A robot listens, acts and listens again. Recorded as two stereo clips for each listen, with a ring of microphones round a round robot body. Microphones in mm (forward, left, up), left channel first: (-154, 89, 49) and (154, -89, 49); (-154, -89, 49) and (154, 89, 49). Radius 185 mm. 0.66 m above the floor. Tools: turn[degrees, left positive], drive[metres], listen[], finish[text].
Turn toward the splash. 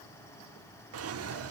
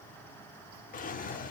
Action: listen[]
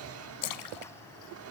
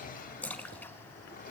Thought: The splash: 125° left.
Action: turn[125]
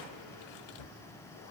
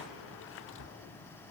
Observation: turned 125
Action: finish[Facing where the splash came from. I can't hear it now.]